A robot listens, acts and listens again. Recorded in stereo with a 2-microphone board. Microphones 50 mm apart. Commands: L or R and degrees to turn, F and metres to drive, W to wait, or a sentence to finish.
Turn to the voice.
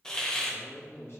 L50
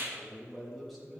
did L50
Found it: a man speaking, straight ahead.